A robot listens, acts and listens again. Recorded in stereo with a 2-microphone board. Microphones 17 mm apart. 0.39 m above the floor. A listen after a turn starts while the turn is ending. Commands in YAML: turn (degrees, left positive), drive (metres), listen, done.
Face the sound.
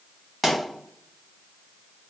turn: 30
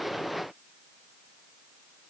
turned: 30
listen: true
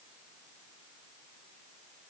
done: "I heard a pop, but can't make it out now. It was about 30° right or 150° left."